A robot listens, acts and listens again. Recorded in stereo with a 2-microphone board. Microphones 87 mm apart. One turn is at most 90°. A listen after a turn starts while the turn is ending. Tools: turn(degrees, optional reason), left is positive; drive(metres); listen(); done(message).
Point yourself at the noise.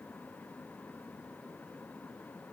listen()
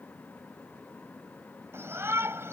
turn(degrees=-30, reason="The shout: about 30° right or 150° right.")
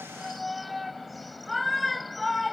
done("Facing the shout.")